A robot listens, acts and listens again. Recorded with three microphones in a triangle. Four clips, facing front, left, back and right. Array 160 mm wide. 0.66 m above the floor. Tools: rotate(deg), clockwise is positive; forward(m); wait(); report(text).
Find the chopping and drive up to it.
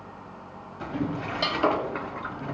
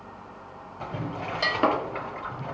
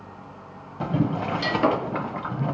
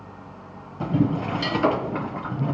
rotate(-115)
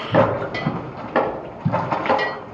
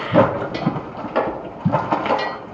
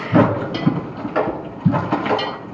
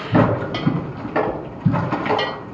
rotate(-10)
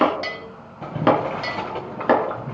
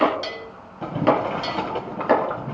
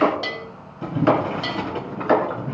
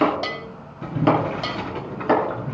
forward(1.0)
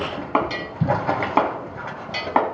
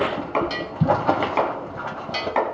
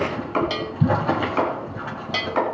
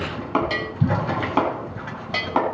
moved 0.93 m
rotate(15)
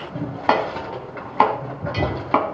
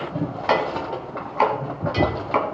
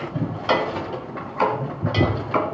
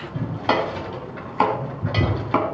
forward(1.0)
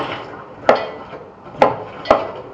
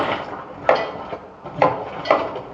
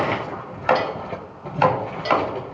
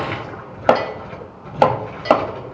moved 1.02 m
rotate(20)
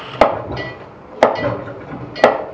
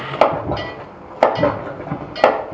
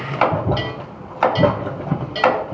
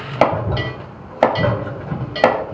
forward(1.0)
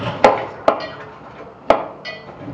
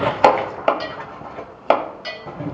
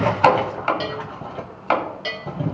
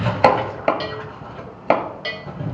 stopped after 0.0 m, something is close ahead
rotate(-10)
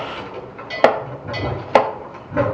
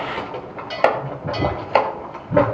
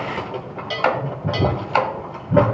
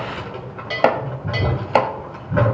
report("I am next to the chopping.")